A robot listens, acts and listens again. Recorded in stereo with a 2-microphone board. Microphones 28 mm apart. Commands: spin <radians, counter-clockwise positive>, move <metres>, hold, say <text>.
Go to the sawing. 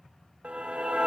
hold
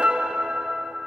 hold
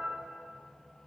say I can't make out sawing to turn to.